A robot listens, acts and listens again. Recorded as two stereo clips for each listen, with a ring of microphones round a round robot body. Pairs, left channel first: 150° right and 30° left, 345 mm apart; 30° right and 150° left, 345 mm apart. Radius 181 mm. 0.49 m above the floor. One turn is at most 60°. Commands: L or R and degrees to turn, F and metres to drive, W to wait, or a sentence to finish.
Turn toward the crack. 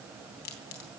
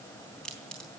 R60
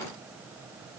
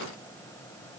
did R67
R50
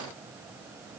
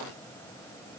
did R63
L10
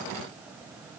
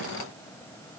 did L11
Facing where the crack came from. I can't hear it now.